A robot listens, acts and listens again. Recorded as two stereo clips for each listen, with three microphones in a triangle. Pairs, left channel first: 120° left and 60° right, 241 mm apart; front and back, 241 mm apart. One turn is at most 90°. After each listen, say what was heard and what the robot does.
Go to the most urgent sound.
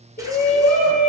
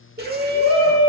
The shout: 160° left. Turn 90° left.
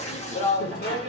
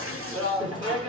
The shout is now 115° left. Turn 90° left.
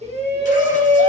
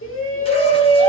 Drive 1.0 m forward.
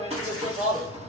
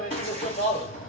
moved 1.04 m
The shout is now 10° right. Turn 10° right.
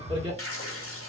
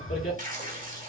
Drive 1.0 m forward.
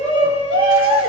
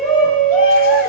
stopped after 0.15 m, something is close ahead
I am next to the shout.